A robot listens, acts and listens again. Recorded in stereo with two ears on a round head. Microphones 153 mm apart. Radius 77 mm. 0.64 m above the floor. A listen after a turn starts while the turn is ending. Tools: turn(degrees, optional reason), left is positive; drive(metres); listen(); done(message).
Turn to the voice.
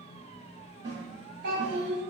turn(degrees=-55, reason="The child speaking: about 55° right or 125° right.")
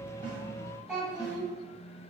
done("Facing the child speaking, 1 to 2 m away.")